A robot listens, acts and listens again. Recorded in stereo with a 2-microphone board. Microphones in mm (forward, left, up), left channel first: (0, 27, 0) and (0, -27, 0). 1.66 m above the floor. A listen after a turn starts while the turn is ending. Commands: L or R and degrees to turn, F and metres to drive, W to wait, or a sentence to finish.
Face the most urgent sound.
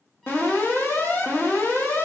L40
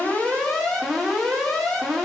Facing the alarm.